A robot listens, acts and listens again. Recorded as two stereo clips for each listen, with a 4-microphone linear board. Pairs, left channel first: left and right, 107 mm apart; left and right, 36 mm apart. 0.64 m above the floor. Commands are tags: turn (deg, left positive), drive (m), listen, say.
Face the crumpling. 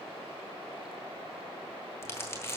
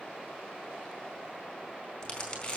<turn deg="25"/>
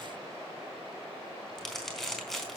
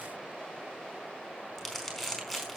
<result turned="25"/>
<say>Found it: crumpling, straight ahead.</say>